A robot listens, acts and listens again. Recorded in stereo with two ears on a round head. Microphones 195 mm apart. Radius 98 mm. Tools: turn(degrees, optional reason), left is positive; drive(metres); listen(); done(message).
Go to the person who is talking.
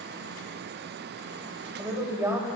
turn(degrees=-30)
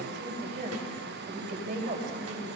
turn(degrees=-140, reason="So it is at 140° right.")
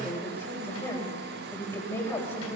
turn(degrees=10, reason="The woman speaking is now 10° left.")
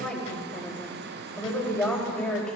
drive(metres=1.0)
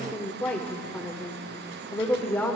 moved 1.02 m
turn(degrees=10, reason="The woman speaking is now 10° left.")
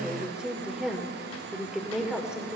drive(metres=1.0)
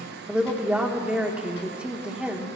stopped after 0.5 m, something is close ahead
done("Arrived at the woman speaking, straight ahead.")